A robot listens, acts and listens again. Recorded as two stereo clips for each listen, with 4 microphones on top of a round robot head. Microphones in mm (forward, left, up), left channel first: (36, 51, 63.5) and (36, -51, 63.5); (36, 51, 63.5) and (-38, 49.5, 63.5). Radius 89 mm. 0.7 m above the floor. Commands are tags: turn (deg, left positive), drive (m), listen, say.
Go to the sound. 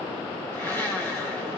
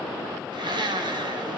<turn deg="165"/>
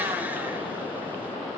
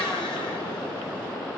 <listen/>
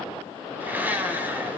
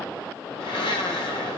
<turn deg="-20"/>
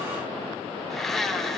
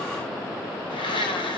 <drive m="1.0"/>
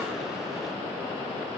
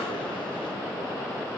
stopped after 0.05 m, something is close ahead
<listen/>
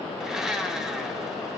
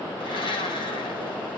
<say>Blocked. The blender is further on, straight ahead.</say>